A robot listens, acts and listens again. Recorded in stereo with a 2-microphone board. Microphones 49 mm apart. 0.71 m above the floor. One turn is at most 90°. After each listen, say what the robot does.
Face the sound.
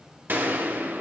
Turn 45° right.
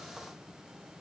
Keep listening.
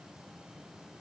I heard a gunshot, but can't make it out now. It was about straight ahead or 90° right.